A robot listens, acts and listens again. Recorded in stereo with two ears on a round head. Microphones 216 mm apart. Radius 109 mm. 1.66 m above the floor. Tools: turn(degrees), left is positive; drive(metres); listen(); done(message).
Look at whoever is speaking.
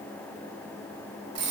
listen()
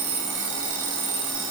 listen()
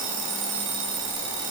done("I can't make out anyone speaking, only an alarm clock.")